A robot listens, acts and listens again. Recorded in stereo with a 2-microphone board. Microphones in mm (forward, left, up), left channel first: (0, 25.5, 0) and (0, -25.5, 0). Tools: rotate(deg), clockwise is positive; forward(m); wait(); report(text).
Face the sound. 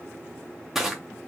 rotate(30)
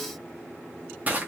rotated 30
rotate(145)
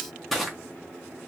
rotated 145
report("Found it: crushing, straight ahead.")